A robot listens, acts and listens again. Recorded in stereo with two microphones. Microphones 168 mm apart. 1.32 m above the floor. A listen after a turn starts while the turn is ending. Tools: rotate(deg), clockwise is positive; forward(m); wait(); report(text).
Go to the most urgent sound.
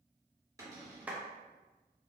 wait()
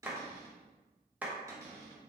wait()
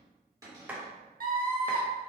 rotate(60)
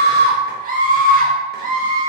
rotate(55)
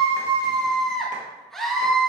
forward(1.0)
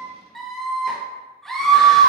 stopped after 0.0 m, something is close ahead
report("Blocked. The scream is further on, straight ahead.")